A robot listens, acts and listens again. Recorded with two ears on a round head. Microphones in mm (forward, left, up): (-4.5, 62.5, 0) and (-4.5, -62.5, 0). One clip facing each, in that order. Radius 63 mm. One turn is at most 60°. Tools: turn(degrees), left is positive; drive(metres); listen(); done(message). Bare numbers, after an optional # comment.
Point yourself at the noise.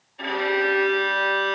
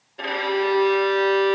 # The violin: about 60° right or 120° right.
turn(-60)
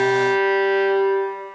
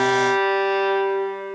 # So it is at 50° right.
turn(-50)
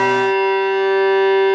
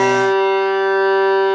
done("Facing the violin, 2 to 4 m away.")